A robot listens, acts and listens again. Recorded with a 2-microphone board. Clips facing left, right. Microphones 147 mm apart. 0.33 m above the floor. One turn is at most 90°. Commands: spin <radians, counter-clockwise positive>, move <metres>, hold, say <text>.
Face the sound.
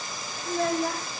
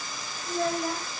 spin 1.22
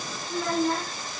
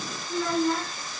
spin 0.44
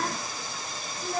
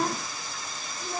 spin -0.44
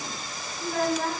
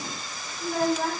spin -0.26
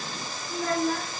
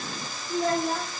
spin -0.44
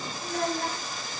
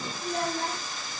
say Facing the child speaking.